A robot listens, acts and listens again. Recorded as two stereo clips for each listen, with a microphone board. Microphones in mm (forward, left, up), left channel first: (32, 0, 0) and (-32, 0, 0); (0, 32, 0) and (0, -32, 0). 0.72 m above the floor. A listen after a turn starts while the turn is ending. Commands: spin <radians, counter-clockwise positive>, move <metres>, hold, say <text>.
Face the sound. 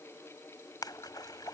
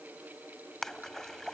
say Facing the splash.